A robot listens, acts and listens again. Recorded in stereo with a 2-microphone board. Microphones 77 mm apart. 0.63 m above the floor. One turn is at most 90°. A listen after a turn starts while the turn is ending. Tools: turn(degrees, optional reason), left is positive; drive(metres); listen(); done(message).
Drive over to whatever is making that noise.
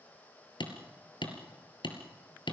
turn(degrees=90)
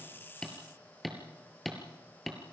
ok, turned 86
drive(metres=1.0)
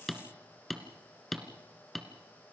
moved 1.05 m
drive(metres=1.0)
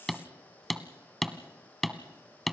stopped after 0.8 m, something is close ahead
done("I am next to the hammering.")